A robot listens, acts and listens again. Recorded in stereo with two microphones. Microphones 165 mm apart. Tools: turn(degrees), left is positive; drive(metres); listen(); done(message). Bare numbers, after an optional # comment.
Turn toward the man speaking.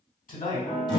# The man speaking: about 60° left or 120° left.
turn(60)
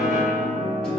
listen()
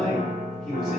done("Found it: a man speaking, straight ahead.")